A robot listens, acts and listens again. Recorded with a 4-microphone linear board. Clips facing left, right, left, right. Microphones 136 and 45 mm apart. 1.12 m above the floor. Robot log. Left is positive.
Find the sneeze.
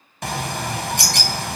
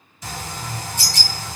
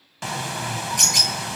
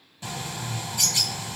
cmd idle
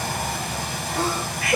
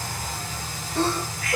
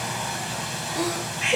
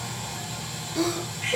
cmd yaw +30
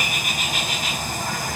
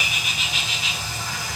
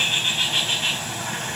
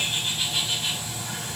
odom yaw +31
cmd idle
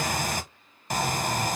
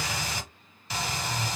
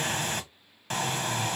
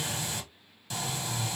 end: I heard a sneeze, but can't make it out now. It was about 20° right or 135° left.